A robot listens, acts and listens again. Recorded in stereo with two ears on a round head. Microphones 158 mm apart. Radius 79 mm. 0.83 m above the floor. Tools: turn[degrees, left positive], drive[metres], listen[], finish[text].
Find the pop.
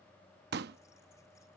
Thought: The pop: about 65° right or 115° right.
Action: turn[-65]
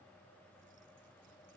Action: listen[]
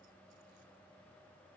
Action: finish[I heard a pop, but can't make it out now. It was about straight ahead or 50° right.]